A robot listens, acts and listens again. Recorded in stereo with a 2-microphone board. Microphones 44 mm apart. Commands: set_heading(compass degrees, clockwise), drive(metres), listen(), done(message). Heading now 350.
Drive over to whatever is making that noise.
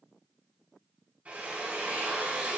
set_heading(30)
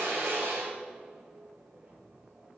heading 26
set_heading(126)
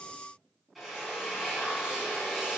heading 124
drive(1.0)
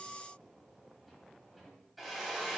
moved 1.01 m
drive(1.0)
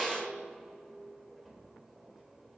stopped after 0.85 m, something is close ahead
done("I am next to the drill.")